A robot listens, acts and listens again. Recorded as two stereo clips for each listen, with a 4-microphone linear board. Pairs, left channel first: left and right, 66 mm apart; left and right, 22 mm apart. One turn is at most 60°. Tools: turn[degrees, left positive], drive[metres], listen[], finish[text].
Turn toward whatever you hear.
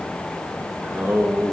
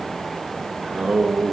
Thought: The singing: about 25° right or 155° right.
Action: turn[-25]
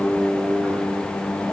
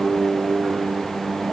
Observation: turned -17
Thought: The singing: about 15° right or 165° right.
Action: turn[-15]
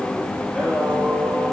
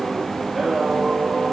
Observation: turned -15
Action: turn[-30]
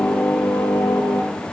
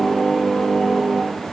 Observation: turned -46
Thought: So it is at 35° left.
Action: turn[35]
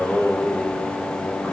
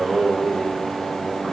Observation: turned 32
Action: finish[Found it: singing, straight ahead, over 4 m away.]